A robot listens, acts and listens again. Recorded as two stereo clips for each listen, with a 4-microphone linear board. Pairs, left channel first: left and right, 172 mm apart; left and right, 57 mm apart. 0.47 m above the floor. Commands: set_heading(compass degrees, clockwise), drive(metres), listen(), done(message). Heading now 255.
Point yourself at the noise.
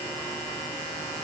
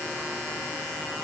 listen()
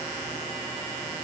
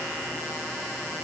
listen()
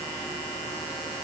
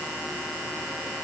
done("I can't make out anything to turn to.")